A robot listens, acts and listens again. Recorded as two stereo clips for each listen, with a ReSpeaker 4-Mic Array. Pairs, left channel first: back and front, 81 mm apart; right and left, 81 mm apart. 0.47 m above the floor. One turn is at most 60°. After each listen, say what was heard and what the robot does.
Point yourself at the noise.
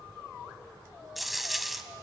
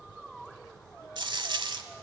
The dropped coin: 90° left. Turn 60° left.
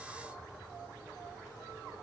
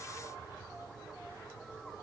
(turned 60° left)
Nothing new. It was at 30° left. Turn 30° left.
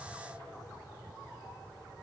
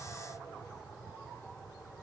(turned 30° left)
Facing where the dropped coin came from. I can't hear it now.